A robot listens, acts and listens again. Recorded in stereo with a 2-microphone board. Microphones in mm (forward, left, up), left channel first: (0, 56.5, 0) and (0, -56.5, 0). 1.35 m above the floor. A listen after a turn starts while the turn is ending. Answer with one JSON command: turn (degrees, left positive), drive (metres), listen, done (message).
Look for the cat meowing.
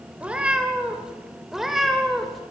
{"turn": 30}
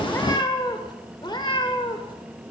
{"turn": 135}
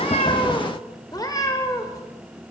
{"turn": 30}
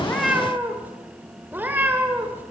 {"turn": -15}
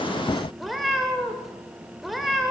{"done": "Found it: a cat meowing, straight ahead."}